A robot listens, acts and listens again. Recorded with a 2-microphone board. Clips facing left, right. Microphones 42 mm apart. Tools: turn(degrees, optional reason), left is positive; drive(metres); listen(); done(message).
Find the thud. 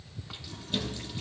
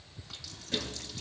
turn(degrees=-70, reason="The thud: about 70° right or 110° right.")
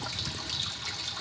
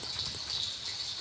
listen()
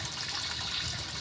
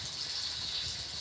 done("I heard a thud, but can't make it out now. It was about straight ahead or 40° right.")